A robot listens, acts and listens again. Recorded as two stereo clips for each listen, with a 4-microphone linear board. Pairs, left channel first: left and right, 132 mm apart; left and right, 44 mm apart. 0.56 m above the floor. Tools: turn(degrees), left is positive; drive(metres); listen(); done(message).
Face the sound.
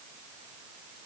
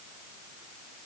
listen()
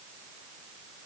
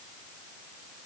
listen()
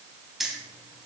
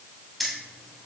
turn(degrees=-30)
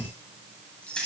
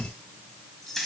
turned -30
turn(degrees=30)
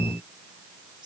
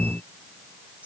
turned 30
listen()
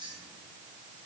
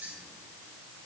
listen()
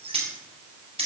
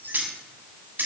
turn(degrees=-45)
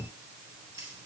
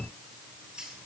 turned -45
turn(degrees=-20)
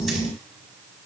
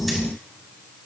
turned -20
listen()
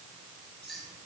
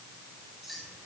done("Facing the keys jangling, 2 to 4 m away.")